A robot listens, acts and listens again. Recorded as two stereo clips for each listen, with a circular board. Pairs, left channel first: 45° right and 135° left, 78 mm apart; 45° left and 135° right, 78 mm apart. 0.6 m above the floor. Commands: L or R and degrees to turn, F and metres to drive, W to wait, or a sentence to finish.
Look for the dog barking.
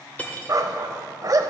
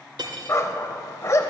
L95
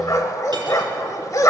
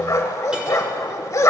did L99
Found it: a dog barking, straight ahead, under 1 m away.